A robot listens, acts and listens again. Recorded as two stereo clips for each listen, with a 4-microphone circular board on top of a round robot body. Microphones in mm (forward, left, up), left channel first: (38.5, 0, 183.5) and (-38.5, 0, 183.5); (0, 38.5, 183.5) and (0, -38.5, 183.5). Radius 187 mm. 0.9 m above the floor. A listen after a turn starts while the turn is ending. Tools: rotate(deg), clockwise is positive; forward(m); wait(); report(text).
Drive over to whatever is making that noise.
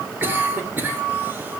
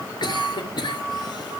rotate(-115)
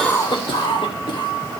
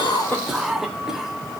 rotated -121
forward(1.0)
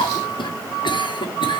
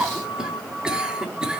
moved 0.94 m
rotate(10)
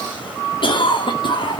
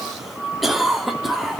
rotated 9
forward(1.0)
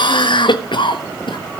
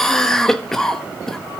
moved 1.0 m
forward(1.0)
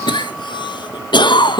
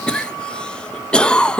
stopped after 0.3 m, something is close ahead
rotate(-10)
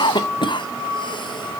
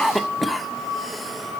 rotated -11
report("I am next to the cough.")